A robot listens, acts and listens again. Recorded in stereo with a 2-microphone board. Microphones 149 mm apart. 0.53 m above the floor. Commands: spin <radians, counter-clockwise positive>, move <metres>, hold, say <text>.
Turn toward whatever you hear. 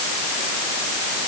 hold
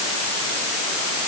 hold
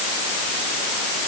say I can't make out anything to turn to.